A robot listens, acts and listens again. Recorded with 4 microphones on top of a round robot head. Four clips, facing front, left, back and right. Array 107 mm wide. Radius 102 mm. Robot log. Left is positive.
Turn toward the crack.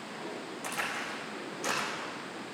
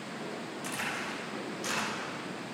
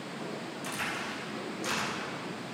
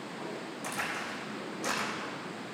note: The crack: 40° right.
cmd yaw -40
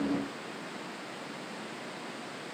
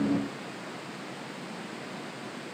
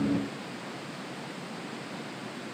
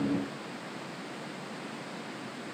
end: Facing where the crack came from. I can't hear it now.